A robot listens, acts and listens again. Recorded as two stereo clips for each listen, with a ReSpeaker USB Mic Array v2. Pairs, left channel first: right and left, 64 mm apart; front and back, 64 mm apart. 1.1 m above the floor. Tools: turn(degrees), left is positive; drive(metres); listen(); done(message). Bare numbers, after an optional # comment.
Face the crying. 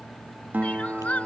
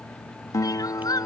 # The crying: 20° right.
turn(-20)
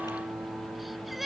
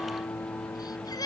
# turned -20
done("Facing the crying.")